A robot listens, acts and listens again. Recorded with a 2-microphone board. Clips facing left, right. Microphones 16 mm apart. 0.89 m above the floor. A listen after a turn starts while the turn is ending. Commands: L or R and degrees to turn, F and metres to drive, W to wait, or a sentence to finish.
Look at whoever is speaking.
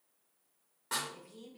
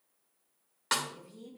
L60
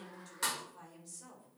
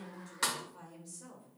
Found it: a woman speaking, straight ahead.